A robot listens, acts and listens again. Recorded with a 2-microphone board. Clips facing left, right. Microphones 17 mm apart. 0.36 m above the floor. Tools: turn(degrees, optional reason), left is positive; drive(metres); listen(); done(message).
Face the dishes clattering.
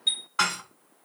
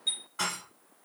turn(degrees=50, reason="The dishes clattering: about 50° left or 130° left.")
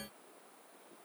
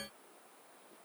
listen()
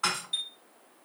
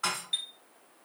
turn(degrees=10, reason="So it is at 10° left.")
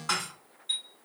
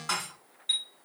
done("Found it: dishes clattering, straight ahead.")